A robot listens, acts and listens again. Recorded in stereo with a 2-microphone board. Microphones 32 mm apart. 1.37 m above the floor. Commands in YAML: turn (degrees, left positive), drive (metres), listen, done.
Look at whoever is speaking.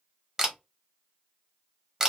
listen: true
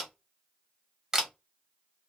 listen: true
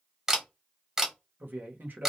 turn: -90
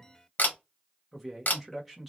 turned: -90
done: "Found it: a man speaking, straight ahead."